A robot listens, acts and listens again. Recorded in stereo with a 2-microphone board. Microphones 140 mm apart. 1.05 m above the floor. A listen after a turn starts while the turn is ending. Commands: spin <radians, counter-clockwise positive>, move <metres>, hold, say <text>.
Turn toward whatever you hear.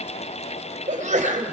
spin -1.05
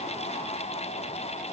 hold
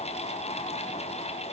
say I heard a sneeze, but can't make it out now. It was about straight ahead or 60° right.